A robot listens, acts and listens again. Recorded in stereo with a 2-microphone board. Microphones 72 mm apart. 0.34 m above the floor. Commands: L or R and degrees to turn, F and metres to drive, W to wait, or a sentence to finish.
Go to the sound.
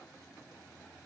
W
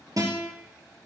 R55
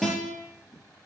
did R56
F1.0
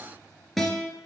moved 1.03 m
F1.0
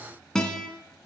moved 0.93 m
L10
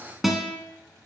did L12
F1.0
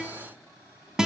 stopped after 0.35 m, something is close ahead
R10
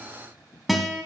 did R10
Arrived at the guitar, straight ahead.